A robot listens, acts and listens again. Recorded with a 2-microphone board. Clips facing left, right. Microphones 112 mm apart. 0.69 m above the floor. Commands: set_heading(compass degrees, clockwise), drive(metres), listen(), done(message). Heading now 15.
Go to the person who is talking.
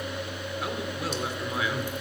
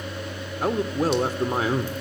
set_heading(55)
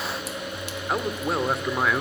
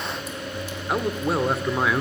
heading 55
drive(1.0)
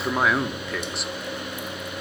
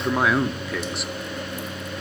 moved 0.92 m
drive(1.0)
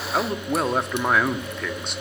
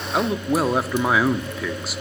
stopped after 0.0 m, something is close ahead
done("Arrived at the man speaking, straight ahead.")